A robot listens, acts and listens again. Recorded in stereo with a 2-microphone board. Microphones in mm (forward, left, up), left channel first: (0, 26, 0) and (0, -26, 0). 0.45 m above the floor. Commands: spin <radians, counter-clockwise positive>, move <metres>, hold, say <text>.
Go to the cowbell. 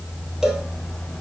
spin -0.52
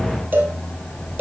spin -2.53
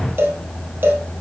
spin -0.79
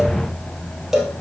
spin -0.17
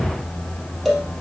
move 1.0
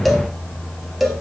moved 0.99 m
move 1.0
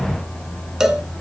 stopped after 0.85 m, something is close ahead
spin -0.17
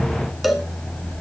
say Arrived at the cowbell, straight ahead.